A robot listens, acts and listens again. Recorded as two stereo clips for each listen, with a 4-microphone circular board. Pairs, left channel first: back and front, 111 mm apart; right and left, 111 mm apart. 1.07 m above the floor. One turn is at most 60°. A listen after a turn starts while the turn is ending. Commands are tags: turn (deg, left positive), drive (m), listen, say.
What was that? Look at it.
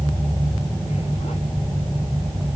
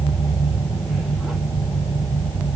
<listen/>
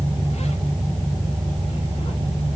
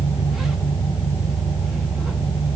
<listen/>
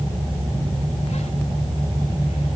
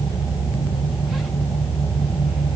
<say>I can't make out anything to turn to.</say>